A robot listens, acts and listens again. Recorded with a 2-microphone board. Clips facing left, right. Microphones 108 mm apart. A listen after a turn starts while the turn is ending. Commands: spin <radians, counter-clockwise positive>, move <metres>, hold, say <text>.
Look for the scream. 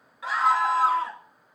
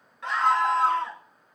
spin 0.52
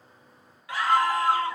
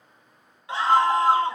spin -0.44
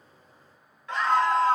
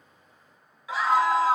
say Facing the scream, 2 to 4 m away.